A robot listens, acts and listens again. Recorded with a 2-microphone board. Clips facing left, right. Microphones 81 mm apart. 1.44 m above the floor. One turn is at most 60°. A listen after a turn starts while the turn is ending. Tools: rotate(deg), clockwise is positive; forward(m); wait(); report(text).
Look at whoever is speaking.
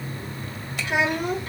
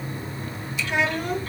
rotate(-15)
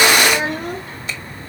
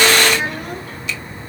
rotate(-60)
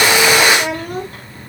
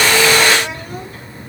rotate(-60)
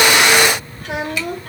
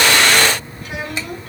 rotate(-60)
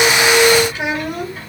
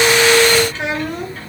rotate(-10)
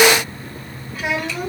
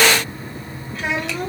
report("Found it: a child speaking, straight ahead.")